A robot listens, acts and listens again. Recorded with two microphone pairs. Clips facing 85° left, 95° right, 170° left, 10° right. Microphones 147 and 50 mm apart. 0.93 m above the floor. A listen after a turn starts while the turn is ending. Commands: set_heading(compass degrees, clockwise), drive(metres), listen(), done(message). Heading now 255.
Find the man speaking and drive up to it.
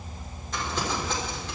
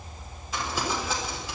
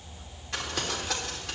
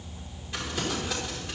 listen()
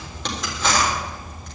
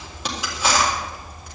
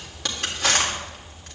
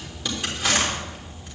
listen()
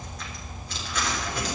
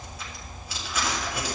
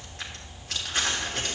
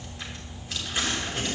done("I can't make out a man speaking to turn to.")